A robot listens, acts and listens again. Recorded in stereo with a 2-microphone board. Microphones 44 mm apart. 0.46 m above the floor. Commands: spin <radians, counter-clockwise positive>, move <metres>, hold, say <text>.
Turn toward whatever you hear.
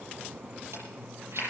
spin -1.22
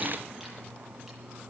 hold
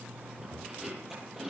say Facing the chewing.